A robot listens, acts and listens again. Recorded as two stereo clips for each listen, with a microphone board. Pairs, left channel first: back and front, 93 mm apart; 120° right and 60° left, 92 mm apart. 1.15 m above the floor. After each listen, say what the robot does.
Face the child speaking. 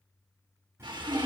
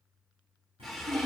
Turn 55° left.
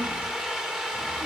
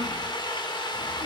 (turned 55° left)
Turn 10° right.
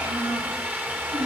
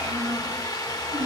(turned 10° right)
Facing the child speaking.